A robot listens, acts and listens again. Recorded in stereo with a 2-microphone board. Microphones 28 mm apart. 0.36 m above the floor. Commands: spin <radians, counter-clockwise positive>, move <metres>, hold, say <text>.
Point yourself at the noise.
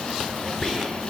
spin 0.26
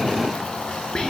spin 2.62
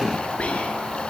spin 0.79
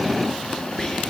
spin 0.35
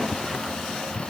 hold
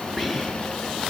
say Facing the whispering, over 4 m away.